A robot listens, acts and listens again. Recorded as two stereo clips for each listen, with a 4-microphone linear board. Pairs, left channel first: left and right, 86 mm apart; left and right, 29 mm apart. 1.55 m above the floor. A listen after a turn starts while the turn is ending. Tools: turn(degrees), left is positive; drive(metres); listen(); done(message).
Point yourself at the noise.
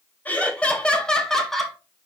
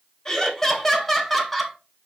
turn(degrees=30)
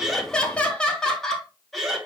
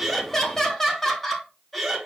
turn(degrees=-30)
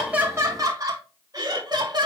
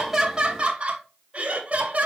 turn(degrees=-130)
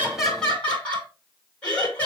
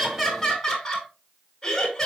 turn(degrees=15)
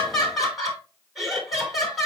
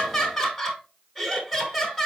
done("Found it: laughter, straight ahead, 2 to 4 m away.")